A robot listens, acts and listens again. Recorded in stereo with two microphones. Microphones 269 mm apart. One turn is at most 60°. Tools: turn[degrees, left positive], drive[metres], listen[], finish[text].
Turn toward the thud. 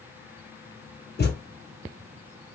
Thought: The thud: about 35° left or 145° left.
Action: turn[35]
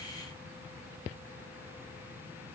Action: listen[]
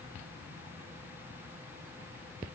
Action: finish[I heard a thud, but can't make it out now. It was about straight ahead or 110° left.]